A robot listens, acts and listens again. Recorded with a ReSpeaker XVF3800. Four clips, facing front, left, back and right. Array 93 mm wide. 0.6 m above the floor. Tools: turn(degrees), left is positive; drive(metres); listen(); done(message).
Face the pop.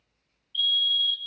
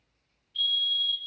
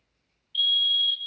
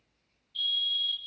listen()
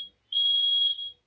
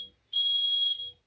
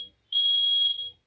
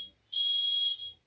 listen()
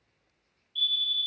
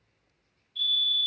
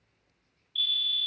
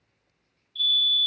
done("I can't make out a pop to turn to.")